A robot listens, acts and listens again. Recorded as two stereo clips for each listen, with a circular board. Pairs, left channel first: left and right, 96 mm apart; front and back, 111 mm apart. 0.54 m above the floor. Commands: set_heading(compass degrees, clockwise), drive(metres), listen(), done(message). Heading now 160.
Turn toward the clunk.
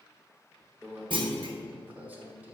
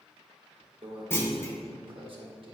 set_heading(230)
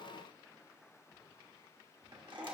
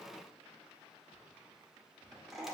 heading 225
done("Facing where the clunk came from. I can't hear it now.")